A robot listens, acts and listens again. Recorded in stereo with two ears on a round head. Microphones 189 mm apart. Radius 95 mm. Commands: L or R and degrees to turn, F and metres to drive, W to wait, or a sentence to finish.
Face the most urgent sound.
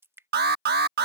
R50
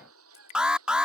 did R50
Found it: an alarm, straight ahead.